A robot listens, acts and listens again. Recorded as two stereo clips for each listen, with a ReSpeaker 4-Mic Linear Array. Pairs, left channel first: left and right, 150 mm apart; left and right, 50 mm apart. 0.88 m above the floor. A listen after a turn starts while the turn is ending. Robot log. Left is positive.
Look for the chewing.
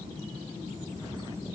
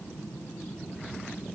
cmd idle
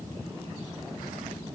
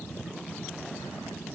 cmd idle
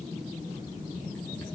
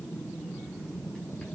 end: I can't make out chewing.